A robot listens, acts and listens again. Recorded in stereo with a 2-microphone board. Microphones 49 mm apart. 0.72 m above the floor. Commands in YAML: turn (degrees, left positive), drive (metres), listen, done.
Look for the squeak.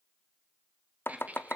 turn: -35
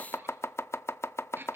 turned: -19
turn: -130
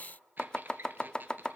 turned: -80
turn: -45
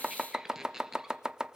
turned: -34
turn: -10
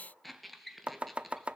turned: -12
done: "Found it: a squeak, straight ahead, 1 to 2 m away."